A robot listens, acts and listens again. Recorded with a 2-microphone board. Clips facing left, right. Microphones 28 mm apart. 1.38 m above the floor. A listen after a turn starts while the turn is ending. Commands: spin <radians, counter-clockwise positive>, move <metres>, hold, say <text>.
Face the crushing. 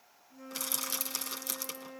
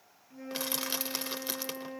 spin -0.52
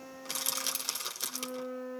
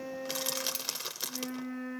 say Found it: crushing, straight ahead, 1 to 2 m away.